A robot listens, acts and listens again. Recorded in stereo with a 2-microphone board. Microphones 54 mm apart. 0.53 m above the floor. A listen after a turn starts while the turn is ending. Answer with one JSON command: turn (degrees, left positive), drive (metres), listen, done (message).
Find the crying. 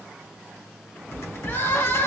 {"turn": 45}
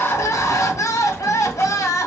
{"turn": 90}
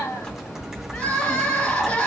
{"turn": 15}
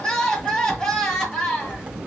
{"done": "Found it: crying, straight ahead."}